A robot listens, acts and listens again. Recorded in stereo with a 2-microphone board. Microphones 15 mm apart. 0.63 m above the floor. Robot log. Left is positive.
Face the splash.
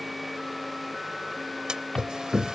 cmd yaw -90
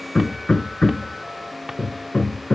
end: Facing where the splash came from. I can't hear it now.